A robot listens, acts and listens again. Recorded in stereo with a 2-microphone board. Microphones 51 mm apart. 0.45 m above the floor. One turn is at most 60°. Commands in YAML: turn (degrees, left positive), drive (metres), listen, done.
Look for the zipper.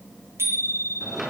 listen: true
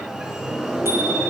listen: true
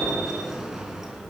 done: "I can't make out a zipper, only a sliding door and a bicycle bell."